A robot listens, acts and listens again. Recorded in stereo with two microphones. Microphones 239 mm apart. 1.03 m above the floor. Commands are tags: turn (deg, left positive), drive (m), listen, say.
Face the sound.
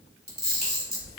<turn deg="-40"/>
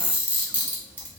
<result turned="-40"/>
<say>Found it: a camera shutter, straight ahead.</say>